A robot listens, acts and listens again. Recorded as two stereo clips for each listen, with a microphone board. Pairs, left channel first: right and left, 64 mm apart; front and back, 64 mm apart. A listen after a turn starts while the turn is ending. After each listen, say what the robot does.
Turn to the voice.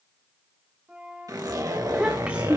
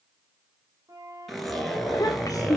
Turn 20° left.
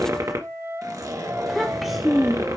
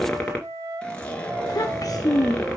Facing the child speaking.